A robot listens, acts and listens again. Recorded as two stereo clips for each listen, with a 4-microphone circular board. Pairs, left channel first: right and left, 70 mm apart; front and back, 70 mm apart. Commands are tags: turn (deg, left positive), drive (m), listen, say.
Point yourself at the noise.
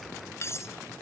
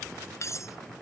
<turn deg="-45"/>
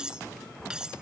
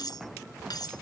<turn deg="10"/>
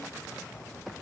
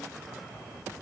<listen/>
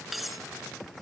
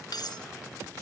<say>Found it: cutlery clinking, straight ahead.</say>